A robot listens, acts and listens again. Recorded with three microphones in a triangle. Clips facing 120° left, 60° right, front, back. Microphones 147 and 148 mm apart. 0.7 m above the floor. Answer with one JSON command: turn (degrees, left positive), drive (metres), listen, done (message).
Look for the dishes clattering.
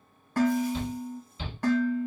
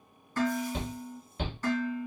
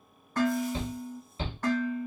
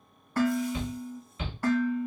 {"turn": 95}
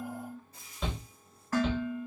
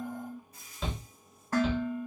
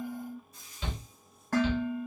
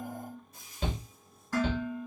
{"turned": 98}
{"done": "Facing the dishes clattering."}